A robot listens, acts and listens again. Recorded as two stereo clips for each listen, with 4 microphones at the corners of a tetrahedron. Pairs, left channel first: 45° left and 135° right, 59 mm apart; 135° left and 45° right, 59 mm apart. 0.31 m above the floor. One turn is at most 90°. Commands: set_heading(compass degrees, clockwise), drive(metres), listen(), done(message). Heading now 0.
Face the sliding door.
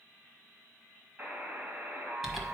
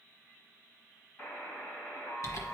listen()
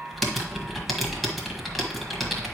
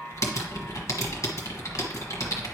listen()
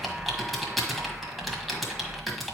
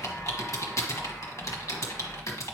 done("I can't make out a sliding door to turn to.")